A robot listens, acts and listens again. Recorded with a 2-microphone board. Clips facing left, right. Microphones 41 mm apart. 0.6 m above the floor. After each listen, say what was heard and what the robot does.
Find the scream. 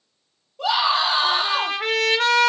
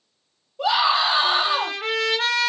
Turn 30° right.
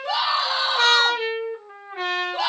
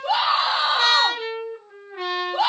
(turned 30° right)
So it is at 145° right. Turn 145° right.
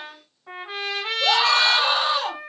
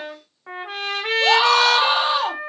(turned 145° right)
The scream is now 15° right. Turn 15° right.
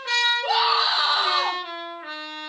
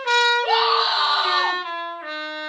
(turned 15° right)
The scream is now 10° right. Turn 10° right.
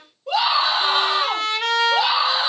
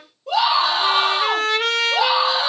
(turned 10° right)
Facing the scream, 1 to 2 m away.